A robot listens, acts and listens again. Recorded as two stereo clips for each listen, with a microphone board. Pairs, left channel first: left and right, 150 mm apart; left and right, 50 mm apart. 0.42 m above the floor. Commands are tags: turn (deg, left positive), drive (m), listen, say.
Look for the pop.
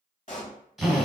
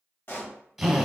<turn deg="55"/>
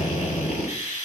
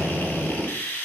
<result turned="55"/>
<listen/>
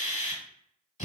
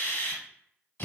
<say>I heard a pop, but can't make it out now. It was about straight ahead or 70° left.</say>